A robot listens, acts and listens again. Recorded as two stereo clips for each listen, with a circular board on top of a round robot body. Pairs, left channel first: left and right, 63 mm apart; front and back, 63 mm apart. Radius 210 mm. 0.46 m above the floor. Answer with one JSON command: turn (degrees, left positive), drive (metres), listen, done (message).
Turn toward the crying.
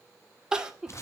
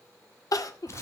{"turn": -10}
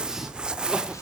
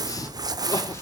{"listen": true}
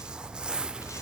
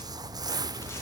{"listen": true}
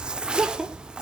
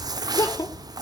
{"done": "Facing the crying, 2 to 4 m away."}